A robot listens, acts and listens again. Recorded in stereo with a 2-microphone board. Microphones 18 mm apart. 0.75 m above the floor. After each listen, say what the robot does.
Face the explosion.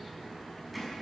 Keep listening.
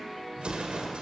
Turn 90° right.
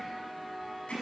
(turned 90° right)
I heard an explosion from this way, but can't make it out now.